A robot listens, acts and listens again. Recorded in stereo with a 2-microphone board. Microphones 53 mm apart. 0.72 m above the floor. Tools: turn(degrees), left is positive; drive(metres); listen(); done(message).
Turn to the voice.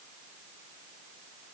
listen()
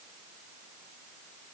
listen()
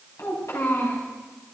turn(degrees=90)
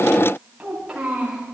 turn(degrees=-10)
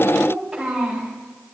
done("Facing the child speaking, over 4 m away.")